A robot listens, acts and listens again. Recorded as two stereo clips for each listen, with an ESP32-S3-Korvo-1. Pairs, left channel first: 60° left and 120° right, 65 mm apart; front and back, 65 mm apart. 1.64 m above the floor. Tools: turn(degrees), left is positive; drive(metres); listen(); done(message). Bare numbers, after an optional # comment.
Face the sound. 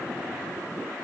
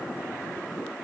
listen()
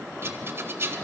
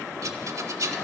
# The rattle: 165° right.
turn(-165)
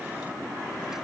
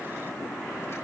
listen()
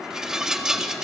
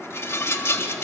# The rattle is now 40° right.
turn(-40)
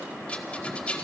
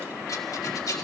# The rattle is now 10° right.
turn(-10)
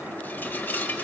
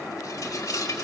done("Facing the rattle, 1 to 2 m away.")